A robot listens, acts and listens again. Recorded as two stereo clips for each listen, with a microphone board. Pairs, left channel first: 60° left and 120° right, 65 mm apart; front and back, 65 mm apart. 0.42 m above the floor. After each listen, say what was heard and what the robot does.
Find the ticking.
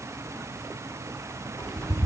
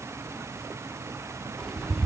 The ticking: 85° left. Turn 85° left.
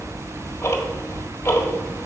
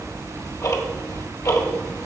The ticking is now 20° left. Turn 20° left.
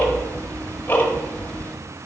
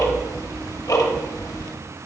Facing the ticking, 1 to 2 m away.